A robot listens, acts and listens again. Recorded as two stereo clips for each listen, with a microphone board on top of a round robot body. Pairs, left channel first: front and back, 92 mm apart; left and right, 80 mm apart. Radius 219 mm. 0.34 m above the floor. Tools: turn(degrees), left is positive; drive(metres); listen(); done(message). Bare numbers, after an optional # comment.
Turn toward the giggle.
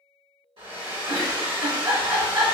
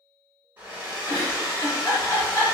# The giggle: 135° left.
turn(135)
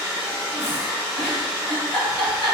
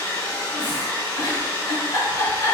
# The giggle is now 60° left.
turn(60)
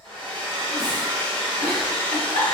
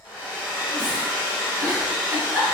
done("Facing the giggle, 1 to 2 m away.")